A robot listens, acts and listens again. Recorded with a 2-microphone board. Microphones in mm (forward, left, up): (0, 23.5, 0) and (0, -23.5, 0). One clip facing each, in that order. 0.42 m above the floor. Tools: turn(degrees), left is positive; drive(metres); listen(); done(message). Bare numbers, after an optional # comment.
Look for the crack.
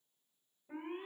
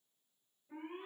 listen()
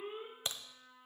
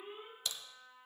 # The crack: about 35° left or 145° left.
turn(35)
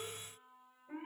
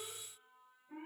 listen()
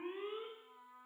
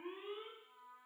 done("I heard a crack, but can't make it out now. It was about straight ahead or 110° left.")